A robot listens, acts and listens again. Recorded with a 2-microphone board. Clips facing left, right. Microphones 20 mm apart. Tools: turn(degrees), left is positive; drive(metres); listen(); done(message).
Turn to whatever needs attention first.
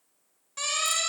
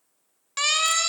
turn(degrees=-65)
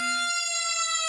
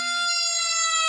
turn(degrees=-45)
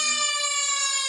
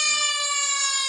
done("Found it: a siren, straight ahead.")